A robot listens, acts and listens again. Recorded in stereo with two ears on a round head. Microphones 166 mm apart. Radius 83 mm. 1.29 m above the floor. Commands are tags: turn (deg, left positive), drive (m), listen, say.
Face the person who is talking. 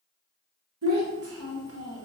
<turn deg="-90"/>
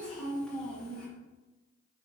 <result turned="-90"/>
<say>Facing the child speaking.</say>